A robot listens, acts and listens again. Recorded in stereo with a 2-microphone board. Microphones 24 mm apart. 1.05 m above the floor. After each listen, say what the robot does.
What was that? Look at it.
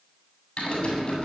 Turn 40° left.
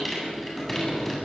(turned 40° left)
Facing the typing on a keyboard.